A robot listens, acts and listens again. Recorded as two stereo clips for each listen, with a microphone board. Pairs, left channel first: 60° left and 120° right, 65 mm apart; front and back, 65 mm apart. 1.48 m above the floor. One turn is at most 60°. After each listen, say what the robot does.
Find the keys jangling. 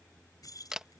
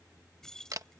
Turn 60° left.
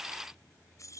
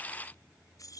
Turn 25° left.
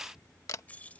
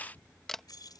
Turn 10° right.
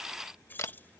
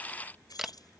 Found it: keys jangling, straight ahead.